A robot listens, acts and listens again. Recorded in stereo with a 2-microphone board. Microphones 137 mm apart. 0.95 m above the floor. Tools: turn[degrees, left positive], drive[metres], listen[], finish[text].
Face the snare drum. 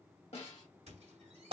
Thought: The snare drum: about 45° left or 135° left.
Action: turn[45]
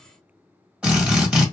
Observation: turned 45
Action: listen[]
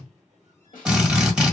Thought: So it is at 90° left.
Action: turn[90]
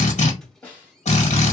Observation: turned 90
Thought: The snare drum is now 10° left.
Action: turn[10]
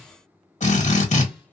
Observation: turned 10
Action: listen[]
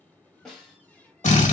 Action: finish[Facing the snare drum, 1 to 2 m away.]